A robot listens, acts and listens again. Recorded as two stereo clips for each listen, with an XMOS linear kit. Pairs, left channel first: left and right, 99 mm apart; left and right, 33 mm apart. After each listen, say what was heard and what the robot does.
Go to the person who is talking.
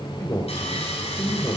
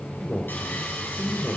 The man speaking: about 30° left or 150° left. Turn 30° left.
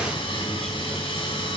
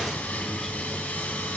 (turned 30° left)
Keep listening.
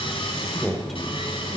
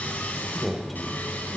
Drive 1.0 m forward.
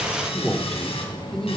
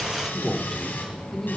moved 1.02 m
Drive 1.0 m forward.
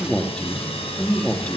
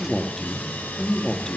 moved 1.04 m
The man speaking is now 10° left. Turn 10° left.
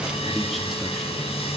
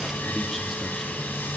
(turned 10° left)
Keep listening.
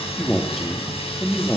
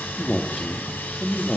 Drive 1.0 m forward.
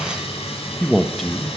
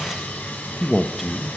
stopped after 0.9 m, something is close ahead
Arrived at the man speaking, straight ahead.